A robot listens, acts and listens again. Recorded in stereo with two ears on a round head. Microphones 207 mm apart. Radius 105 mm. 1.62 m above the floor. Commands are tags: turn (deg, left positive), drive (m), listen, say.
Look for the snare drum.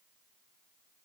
<listen/>
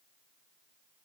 <listen/>
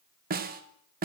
<turn deg="-40"/>
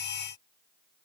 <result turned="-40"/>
<listen/>
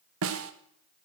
<turn deg="-95"/>
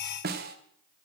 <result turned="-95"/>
<turn deg="-45"/>
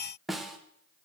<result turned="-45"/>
<say>Facing the snare drum, 1 to 2 m away.</say>